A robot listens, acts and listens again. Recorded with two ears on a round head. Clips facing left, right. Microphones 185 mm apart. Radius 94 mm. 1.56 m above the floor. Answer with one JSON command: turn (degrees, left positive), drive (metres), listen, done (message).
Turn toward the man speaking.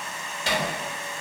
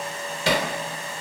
{"listen": true}
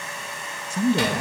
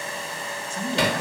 {"turn": 90}
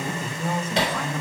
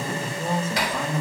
{"done": "Facing the man speaking."}